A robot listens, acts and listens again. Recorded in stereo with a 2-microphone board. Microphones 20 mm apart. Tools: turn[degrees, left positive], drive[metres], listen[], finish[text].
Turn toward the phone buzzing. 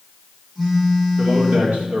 Action: turn[-30]
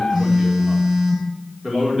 Thought: So it is at 135° right.
Action: turn[-135]
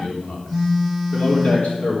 Thought: The phone buzzing is now 20° left.
Action: turn[20]
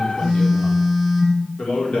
Action: finish[Found it: a phone buzzing, straight ahead, 2 to 4 m away.]